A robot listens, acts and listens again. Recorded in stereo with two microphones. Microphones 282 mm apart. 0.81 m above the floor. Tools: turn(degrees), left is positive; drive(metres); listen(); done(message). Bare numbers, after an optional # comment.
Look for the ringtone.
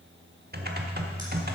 listen()
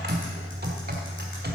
listen()
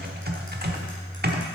done("I can't make out a ringtone, only typing on a keyboard.")